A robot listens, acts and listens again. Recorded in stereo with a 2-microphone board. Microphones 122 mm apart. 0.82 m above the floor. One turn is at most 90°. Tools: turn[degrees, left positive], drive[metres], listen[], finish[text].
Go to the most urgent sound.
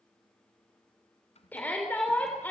Action: turn[30]
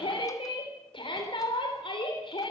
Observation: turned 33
Thought: So it is at 135° left.
Action: turn[90]
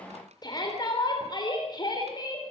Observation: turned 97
Thought: The shout is now 35° left.
Action: turn[35]
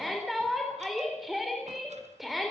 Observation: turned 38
Action: drive[1.0]
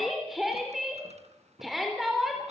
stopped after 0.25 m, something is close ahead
Action: finish[Blocked. The shout is further on, straight ahead.]